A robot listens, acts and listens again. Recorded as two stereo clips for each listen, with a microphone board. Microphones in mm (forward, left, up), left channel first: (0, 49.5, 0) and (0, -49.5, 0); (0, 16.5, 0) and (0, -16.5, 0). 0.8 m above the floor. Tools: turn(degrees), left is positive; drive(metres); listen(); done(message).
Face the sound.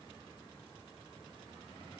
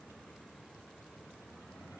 listen()
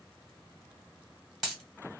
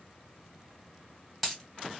turn(degrees=30)
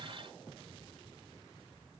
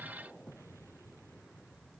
listen()
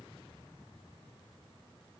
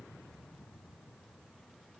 done("I heard a dropped coin, but can't make it out now. It was about 30° right or 150° left.")